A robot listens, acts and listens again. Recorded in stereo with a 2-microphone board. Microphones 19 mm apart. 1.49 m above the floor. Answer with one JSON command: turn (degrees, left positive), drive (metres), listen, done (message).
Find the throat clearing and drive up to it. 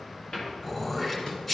{"turn": 20}
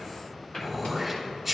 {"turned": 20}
{"drive": 1.0}
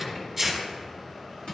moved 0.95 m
{"drive": 1.0}
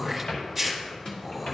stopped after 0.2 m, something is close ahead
{"done": "Arrived at the throat clearing, straight ahead."}